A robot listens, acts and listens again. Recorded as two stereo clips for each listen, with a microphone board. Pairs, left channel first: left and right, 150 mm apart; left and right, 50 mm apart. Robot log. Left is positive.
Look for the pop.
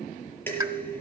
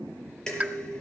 note: The pop: about 20° right or 160° right.
cmd yaw -20
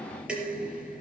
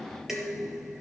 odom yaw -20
cmd idle
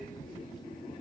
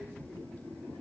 end: I heard a pop, but can't make it out now. It was about straight ahead or 140° right.